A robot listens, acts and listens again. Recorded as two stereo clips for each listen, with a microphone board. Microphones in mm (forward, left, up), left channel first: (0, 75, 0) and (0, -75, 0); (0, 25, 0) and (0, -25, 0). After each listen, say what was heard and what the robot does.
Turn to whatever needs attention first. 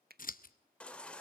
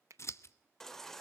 Turn 30° left.
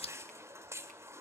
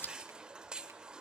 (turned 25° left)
So it is at 15° right. Turn 15° right.
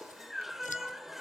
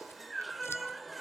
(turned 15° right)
Facing the baby crying.